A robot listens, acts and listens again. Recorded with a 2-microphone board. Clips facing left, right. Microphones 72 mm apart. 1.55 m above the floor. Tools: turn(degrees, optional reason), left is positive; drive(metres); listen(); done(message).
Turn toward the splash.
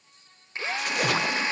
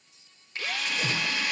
turn(degrees=70, reason="The splash: about 70° left or 110° left.")
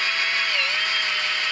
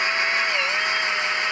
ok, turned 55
listen()
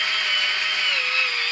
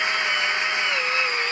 done("I heard a splash, but can't make it out now. It was about 15° left or 55° left.")